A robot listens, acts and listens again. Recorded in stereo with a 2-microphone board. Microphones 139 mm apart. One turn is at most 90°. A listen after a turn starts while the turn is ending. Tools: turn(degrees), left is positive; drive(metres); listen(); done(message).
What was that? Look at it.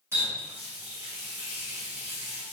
turn(degrees=-20)
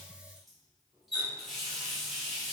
done("Facing the running tap, 1 to 2 m away.")